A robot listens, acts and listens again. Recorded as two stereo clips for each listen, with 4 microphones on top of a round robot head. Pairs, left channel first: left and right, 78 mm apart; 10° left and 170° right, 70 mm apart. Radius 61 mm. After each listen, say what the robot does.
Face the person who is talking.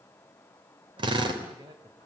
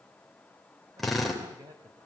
Turn 125° right.
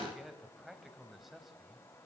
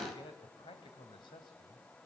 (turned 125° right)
Facing the man speaking, 2 to 4 m away.